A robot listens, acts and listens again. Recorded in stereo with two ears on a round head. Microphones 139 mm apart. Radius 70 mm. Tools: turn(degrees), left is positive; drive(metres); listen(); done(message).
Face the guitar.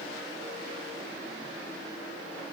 listen()
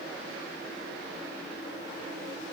listen()
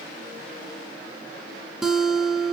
turn(degrees=-30)
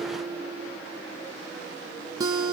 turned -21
turn(degrees=-155)
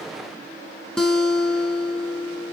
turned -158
done("Facing the guitar, under 1 m away.")